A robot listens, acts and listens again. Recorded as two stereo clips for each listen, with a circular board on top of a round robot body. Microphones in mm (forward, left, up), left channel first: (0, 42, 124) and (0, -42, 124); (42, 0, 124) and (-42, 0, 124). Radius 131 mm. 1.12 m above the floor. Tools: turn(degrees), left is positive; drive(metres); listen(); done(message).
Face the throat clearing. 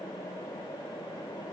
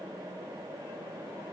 listen()
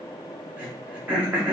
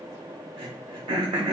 turn(degrees=-165)
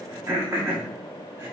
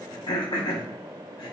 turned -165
turn(degrees=-30)
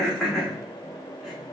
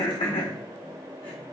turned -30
done("Found it: throat clearing, straight ahead, under 1 m away.")